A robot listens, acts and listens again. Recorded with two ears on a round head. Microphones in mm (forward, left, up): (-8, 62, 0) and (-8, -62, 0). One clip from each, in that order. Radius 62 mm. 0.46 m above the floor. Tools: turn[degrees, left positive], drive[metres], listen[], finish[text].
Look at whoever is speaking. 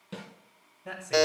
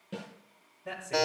Thought: The man speaking: about 30° left or 150° left.
Action: turn[30]
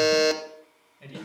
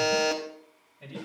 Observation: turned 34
Thought: The man speaking: about 20° left or 160° left.
Action: turn[20]
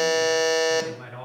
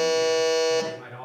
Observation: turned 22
Thought: The man speaking: about 20° left or 160° left.
Action: turn[20]
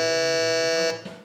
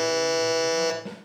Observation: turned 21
Action: listen[]
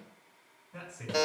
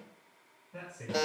Thought: The man speaking: about 20° left or 160° left.
Action: turn[20]
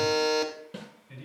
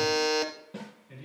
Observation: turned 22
Action: finish[Found it: a man speaking, straight ahead.]